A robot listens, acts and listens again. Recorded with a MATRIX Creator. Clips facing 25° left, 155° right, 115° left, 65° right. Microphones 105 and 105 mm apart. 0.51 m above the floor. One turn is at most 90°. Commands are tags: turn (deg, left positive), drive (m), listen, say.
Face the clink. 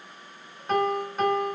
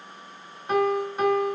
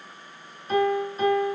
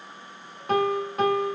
<listen/>
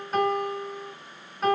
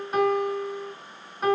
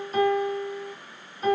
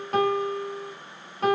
<listen/>
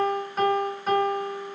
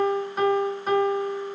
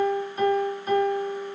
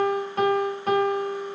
<say>I can't make out a clink to turn to.</say>